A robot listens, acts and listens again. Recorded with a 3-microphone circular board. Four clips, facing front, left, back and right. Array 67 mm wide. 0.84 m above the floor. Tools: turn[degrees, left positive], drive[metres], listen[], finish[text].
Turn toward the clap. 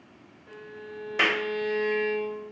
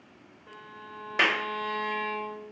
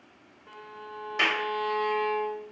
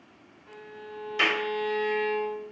Thought: The clap: 80° left.
Action: turn[80]
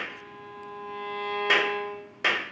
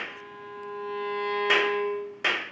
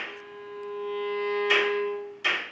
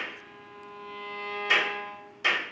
Thought: The clap is now 40° left.
Action: turn[40]
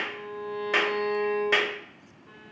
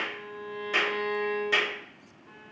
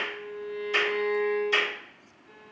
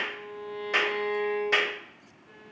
Thought: The clap is now 15° right.
Action: turn[-15]
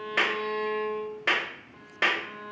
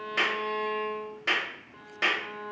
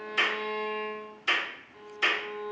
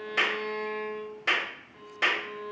Action: finish[Facing the clap, 1 to 2 m away.]